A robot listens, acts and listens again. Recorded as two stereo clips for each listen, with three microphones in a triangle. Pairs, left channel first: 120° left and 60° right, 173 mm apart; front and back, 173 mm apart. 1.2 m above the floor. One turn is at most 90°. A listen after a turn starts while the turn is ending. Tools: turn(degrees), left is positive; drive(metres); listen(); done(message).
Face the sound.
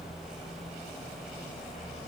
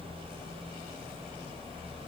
listen()
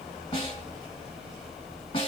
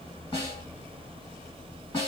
turn(degrees=60)
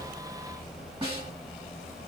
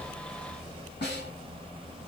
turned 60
done("Found it: a snare drum, straight ahead, 2 to 4 m away.")